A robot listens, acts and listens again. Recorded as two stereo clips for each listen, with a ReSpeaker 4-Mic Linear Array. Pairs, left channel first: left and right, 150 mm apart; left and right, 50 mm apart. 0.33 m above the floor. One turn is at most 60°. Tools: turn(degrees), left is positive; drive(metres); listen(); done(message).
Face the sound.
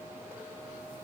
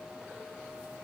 listen()
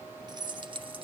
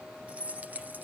turn(degrees=-35)
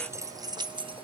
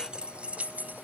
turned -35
turn(degrees=-35)
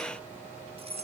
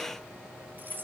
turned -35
turn(degrees=-45)
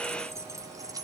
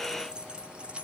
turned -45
turn(degrees=-25)
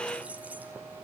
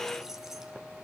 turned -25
listen()
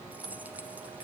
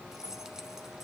turn(degrees=-10)
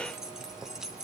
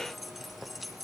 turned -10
done("Facing the keys jangling.")